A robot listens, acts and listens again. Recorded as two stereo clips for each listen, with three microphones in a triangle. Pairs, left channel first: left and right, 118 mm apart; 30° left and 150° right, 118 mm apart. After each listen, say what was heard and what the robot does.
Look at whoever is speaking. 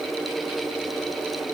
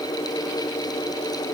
Keep listening.
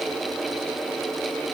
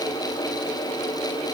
Keep listening.
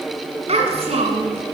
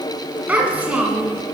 The child speaking: 75° right. Turn 75° right.
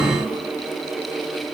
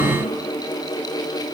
Keep listening.
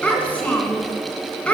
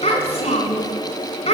The child speaking is now 15° left. Turn 15° left.
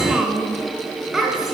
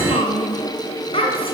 Found it: a child speaking, straight ahead, 2 to 4 m away.